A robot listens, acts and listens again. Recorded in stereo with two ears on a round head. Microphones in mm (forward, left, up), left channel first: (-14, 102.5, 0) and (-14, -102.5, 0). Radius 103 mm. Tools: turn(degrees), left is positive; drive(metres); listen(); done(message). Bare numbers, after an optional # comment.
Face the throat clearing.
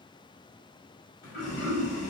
# The throat clearing: about 50° left or 130° left.
turn(50)
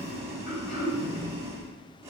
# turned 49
# So it is at 80° left.
turn(80)
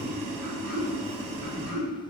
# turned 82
done("Facing the throat clearing, 1 to 2 m away.")